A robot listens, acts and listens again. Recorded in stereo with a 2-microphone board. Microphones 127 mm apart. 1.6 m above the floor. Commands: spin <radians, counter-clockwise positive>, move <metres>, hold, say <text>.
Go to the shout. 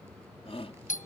spin 0.87
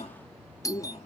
spin 1.31
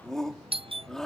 move 1.0
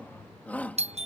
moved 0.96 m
spin 0.26
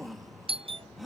move 1.0
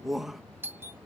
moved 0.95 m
move 1.0
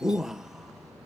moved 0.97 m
move 1.0
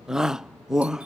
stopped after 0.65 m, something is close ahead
say Arrived at the shout, straight ahead.